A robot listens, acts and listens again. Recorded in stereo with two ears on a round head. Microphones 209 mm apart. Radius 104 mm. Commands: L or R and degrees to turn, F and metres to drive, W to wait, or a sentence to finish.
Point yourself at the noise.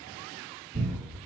R30
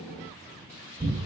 L25
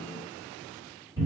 R10
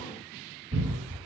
Found it: a cupboard door, straight ahead.